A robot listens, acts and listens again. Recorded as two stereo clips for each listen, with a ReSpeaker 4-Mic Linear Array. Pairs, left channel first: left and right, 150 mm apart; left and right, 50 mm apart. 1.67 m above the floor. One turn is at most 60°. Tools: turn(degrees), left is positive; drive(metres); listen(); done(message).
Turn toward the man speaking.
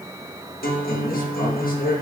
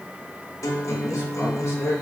turn(degrees=60)
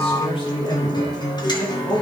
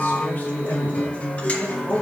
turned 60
turn(degrees=20)
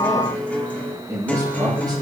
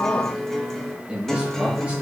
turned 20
turn(degrees=-25)
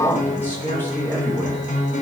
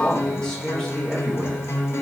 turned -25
turn(degrees=15)
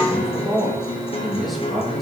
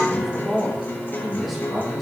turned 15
done("Found it: a man speaking, straight ahead.")